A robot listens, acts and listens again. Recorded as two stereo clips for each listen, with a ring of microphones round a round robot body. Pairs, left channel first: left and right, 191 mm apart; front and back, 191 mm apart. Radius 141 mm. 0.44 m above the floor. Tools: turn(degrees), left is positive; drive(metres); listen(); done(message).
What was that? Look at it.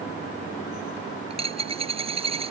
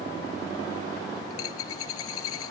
turn(degrees=-30)
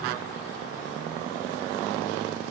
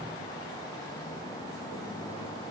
done("I heard a dropped coin from this way, but can't make it out now.")